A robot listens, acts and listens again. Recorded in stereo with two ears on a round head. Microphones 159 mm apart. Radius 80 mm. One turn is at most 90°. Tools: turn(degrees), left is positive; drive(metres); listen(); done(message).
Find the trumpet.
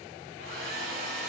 listen()
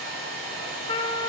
turn(degrees=30)
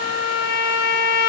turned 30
turn(degrees=90)
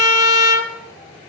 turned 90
turn(degrees=40)
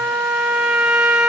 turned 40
done("Facing the trumpet, 1 to 2 m away.")